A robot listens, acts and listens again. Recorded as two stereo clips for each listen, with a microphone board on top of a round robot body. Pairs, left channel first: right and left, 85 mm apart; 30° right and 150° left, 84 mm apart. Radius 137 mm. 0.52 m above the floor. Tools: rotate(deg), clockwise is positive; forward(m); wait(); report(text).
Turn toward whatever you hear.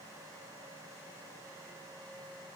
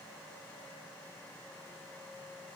wait()
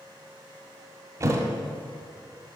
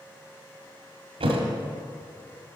rotate(-150)
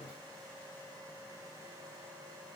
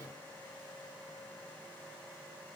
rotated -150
report("I heard a thud from this way, but can't make it out now.")